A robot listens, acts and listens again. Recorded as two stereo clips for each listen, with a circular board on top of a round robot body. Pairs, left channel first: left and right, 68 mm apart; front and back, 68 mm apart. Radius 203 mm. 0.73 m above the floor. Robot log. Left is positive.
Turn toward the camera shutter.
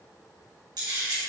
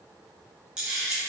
note: The camera shutter: 100° right.
cmd yaw -100
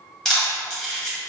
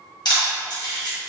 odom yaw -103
end: Facing the camera shutter, 1 to 2 m away.